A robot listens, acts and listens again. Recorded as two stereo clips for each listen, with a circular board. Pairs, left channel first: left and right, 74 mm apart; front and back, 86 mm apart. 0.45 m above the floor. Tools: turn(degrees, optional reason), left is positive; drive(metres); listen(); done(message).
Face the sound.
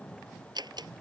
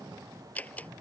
turn(degrees=-70, reason="The door slam: 70° right.")
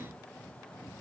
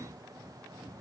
done("Facing where the door slam came from. I can't hear it now.")